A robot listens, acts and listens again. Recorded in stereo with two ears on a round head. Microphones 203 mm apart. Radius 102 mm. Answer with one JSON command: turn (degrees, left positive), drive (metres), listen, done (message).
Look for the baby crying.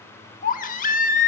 {"turn": 35}
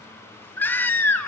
{"turn": 10}
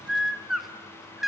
{"done": "Found it: a baby crying, straight ahead."}